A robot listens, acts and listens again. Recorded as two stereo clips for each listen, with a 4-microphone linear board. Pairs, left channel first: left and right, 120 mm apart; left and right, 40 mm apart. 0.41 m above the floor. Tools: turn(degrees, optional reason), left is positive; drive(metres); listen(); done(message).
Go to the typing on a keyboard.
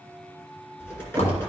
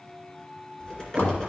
turn(degrees=20, reason="The typing on a keyboard: about 20° left or 160° left.")
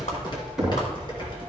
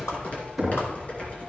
turn(degrees=140, reason="So it is at 140° left.")
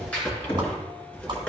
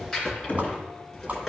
turn(degrees=10, reason="The typing on a keyboard is now 10° left.")
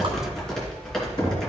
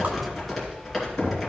drive(metres=1.0)
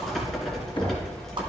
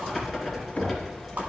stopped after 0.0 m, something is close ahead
done("Blocked. The typing on a keyboard is further on, straight ahead.")